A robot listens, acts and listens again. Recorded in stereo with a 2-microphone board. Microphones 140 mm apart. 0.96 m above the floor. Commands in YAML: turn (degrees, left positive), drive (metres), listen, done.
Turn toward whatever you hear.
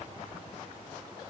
listen: true
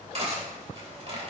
turn: -45
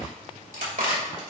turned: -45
turn: -85
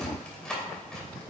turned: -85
done: "Found it: cutlery clinking, straight ahead."